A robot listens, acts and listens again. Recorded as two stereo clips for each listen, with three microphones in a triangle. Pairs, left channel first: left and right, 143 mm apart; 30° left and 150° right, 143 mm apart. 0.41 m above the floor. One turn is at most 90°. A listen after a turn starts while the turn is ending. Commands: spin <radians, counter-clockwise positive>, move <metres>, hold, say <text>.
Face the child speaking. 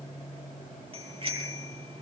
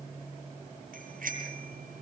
hold
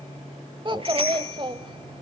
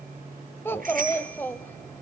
spin -0.79
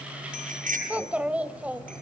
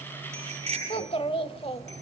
spin -0.17
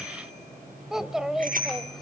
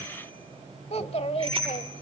say Found it: a child speaking, straight ahead.